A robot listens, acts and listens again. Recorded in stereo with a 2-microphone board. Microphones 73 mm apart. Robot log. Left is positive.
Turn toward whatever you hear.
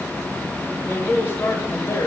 note: The man speaking: about 45° left or 135° left.
cmd yaw +45
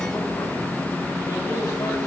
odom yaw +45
cmd idle
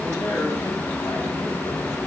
cmd idle
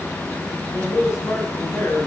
note: So it is at 50° left.
cmd yaw +50
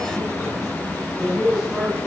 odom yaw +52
end: Facing the man speaking, over 4 m away.